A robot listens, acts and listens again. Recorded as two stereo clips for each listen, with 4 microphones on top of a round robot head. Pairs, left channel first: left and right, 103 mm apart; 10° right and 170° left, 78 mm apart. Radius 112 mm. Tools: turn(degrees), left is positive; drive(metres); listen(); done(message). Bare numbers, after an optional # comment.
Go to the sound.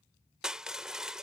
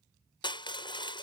drive(1.0)
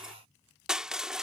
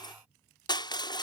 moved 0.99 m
drive(1.0)
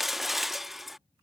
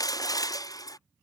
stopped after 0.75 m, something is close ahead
done("I am next to the crushing.")